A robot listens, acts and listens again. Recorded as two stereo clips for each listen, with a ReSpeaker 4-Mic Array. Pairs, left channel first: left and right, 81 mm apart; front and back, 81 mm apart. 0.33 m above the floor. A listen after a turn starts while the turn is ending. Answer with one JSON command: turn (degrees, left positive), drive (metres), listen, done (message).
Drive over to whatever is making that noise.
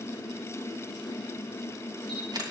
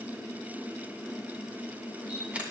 {"turn": -110}
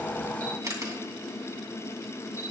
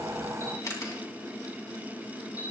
{"turn": -45}
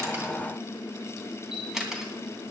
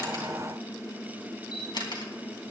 {"drive": 1.0}
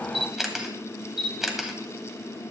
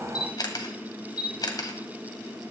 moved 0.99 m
{"drive": 1.0}
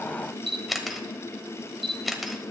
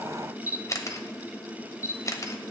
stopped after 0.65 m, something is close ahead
{"done": "I am next to the camera shutter."}